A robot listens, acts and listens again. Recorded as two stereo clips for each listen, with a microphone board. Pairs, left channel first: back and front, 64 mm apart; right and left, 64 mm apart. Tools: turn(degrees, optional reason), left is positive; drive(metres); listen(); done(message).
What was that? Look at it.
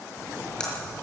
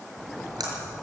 turn(degrees=105, reason="The splash: 105° left.")
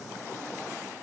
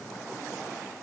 done("I heard a splash from this way, but can't make it out now.")